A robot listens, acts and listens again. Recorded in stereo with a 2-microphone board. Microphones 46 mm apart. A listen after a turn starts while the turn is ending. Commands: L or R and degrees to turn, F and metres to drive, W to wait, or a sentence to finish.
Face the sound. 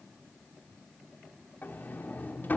L45
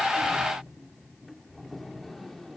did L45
Facing the sliding door.